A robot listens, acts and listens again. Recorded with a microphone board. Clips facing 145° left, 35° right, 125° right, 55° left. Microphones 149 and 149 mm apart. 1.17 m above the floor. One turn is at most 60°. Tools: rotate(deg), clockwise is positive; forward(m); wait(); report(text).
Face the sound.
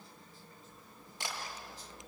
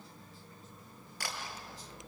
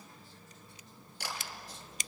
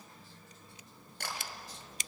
rotate(-60)
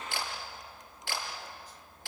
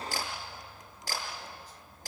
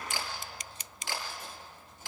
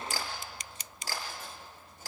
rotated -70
rotate(-10)
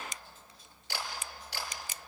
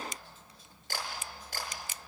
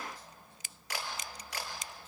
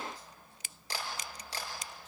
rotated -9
report("Found it: a camera shutter, straight ahead.")